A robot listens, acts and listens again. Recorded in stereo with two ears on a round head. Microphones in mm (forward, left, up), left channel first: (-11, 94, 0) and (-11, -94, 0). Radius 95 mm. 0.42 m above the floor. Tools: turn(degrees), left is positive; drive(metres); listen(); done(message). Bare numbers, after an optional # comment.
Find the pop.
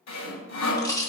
# The pop: about 15° left or 165° left.
turn(15)
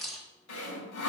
done("Facing the pop, 2 to 4 m away.")